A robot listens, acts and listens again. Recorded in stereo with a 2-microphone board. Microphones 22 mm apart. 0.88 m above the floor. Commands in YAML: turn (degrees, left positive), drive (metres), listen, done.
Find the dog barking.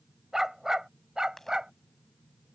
turn: -40
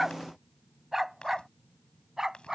turn: -25
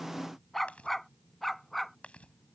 done: "Facing the dog barking."